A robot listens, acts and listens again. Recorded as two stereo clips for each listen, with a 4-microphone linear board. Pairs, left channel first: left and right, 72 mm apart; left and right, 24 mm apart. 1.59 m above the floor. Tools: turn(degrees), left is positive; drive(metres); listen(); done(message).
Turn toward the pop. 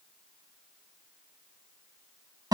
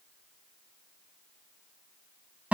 listen()
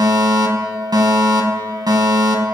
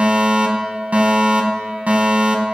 listen()
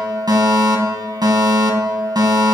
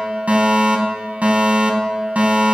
done("I can't make out a pop, only a fire alarm.")